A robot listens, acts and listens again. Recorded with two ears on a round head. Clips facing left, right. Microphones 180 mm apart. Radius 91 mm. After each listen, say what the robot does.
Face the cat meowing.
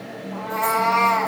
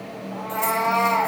Turn 25° left.
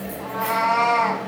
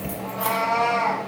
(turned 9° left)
Turn 15° left.
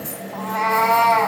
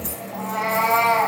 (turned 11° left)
Found it: a cat meowing, straight ahead, 2 to 4 m away.